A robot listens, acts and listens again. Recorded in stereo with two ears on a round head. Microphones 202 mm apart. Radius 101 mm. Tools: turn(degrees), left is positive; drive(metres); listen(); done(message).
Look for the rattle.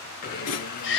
turn(degrees=90)
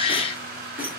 turn(degrees=-10)
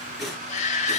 done("Facing the rattle, 2 to 4 m away.")